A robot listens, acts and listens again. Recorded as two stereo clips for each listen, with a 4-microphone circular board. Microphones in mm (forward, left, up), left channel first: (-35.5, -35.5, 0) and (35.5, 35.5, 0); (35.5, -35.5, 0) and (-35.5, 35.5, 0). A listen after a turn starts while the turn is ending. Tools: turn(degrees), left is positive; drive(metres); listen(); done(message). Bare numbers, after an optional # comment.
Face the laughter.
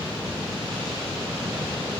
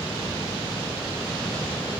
listen()
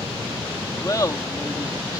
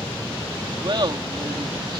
# The laughter: 170° left.
turn(170)
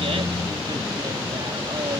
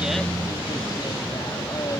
listen()
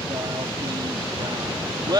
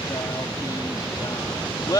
done("Found it: laughter, straight ahead.")